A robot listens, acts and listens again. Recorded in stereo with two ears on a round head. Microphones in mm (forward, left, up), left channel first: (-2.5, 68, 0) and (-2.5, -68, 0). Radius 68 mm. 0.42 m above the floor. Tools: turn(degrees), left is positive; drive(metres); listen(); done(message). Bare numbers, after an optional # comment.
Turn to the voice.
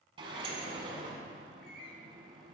listen()
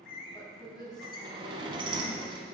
# The woman speaking: about 25° left or 155° left.
turn(25)
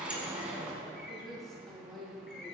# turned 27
done("Found it: a woman speaking, straight ahead.")